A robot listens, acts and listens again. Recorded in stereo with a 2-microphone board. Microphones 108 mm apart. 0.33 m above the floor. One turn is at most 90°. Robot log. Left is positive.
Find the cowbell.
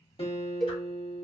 cmd yaw +30
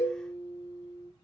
note: So it is at 145° left.
cmd yaw +90
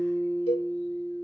note: The cowbell is now 60° left.
cmd yaw +60
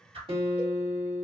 cmd idle
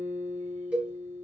note: The cowbell is now 15° right.
cmd yaw -15
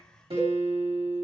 cmd idle
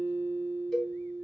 end: Found it: a cowbell, straight ahead, 1 to 2 m away.